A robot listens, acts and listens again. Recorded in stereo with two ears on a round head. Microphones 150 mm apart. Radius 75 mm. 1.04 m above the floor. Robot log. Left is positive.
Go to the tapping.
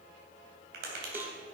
note: The tapping: about 65° right or 115° right.
cmd yaw -65
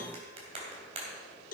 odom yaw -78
note: So it is at 35° right.
cmd yaw -35
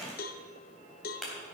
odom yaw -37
cmd fwd 1.0
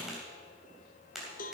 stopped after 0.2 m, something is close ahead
end: Something is in my way. I am facing the tapping but have not reached it.